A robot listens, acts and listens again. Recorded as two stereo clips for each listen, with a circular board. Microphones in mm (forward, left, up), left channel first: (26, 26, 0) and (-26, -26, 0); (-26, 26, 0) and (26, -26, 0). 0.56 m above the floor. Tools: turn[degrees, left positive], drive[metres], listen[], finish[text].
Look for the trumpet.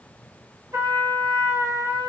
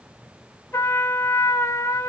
Thought: The trumpet: 175° right.
Action: turn[-175]
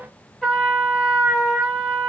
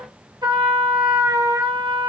Thought: The trumpet is now 35° right.
Action: turn[-35]
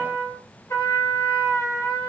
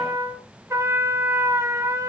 Action: finish[Facing the trumpet, under 1 m away.]